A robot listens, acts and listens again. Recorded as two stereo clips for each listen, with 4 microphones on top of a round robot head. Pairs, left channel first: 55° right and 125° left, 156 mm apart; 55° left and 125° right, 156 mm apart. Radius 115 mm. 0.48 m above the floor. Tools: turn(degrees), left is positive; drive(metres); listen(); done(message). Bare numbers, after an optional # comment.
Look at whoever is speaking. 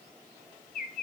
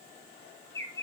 listen()
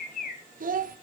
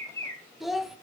# The child speaking: 145° left.
turn(145)
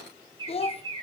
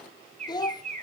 # The child speaking is now 10° right.
turn(-10)
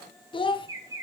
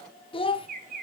done("Found it: a child speaking, straight ahead, 1 to 2 m away.")